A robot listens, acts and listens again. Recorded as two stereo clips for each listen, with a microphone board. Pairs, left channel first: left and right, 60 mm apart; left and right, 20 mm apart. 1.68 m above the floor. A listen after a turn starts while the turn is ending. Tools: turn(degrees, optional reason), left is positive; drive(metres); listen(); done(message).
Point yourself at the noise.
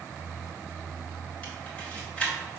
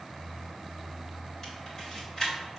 turn(degrees=20, reason="The camera shutter: about 20° left or 160° left.")
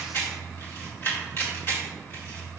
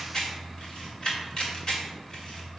turn(degrees=140, reason="So it is at 140° left.")
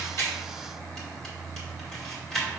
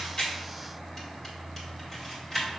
turn(degrees=10, reason="The camera shutter is now 10° left.")
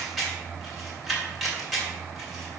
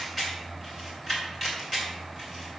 done("Facing the camera shutter.")